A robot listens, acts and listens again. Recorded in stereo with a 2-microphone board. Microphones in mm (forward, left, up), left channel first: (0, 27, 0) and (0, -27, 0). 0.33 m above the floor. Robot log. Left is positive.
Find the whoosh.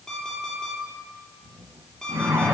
note: The whoosh: about 50° right or 130° right.
cmd yaw -50
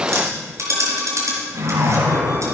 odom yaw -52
note: So it is at 70° right.
cmd yaw -70
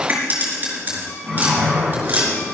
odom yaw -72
end: Found it: a whoosh, straight ahead, 2 to 4 m away.